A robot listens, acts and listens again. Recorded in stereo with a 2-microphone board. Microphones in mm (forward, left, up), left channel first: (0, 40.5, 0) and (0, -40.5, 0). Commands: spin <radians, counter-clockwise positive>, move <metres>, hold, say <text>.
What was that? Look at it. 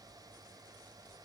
hold
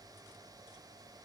hold
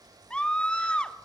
spin 0.52
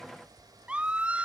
spin -0.26
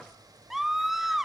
say Facing the scream.